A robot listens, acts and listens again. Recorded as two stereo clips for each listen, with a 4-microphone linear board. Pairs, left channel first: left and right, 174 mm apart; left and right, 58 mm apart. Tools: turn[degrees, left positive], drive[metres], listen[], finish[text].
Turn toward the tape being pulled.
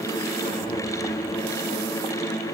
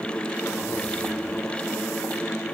Action: listen[]
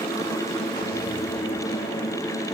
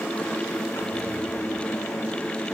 Action: listen[]
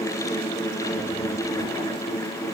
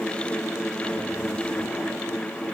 Action: finish[I can't make out tape being pulled to turn to.]